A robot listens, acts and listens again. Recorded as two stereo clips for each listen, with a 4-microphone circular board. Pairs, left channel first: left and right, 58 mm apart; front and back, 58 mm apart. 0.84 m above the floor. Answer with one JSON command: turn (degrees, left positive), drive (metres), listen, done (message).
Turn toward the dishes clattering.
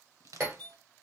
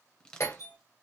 {"turn": -35}
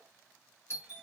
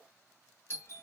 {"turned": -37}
{"done": "Facing the dishes clattering, 2 to 4 m away."}